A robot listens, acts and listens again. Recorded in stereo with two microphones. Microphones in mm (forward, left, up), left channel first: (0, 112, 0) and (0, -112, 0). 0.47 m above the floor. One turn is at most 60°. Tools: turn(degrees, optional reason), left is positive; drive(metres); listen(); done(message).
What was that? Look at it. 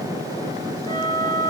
turn(degrees=-30, reason="The flute: about 30° right or 150° right.")
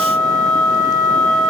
done("Found it: a flute, straight ahead, 2 to 4 m away.")